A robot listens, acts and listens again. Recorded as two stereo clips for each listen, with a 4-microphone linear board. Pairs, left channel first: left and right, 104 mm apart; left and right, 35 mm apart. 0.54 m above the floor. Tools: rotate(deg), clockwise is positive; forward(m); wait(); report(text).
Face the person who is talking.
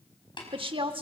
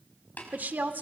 rotate(55)
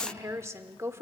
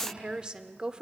rotate(30)
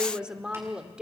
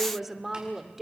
rotate(10)
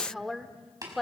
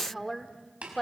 report("Found it: a woman speaking, straight ahead, 1 to 2 m away.")